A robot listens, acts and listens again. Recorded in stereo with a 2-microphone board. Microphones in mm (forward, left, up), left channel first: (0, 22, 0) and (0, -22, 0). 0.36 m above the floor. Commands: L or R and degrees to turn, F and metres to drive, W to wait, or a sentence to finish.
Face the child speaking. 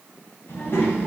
L60
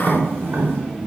Facing the child speaking, 2 to 4 m away.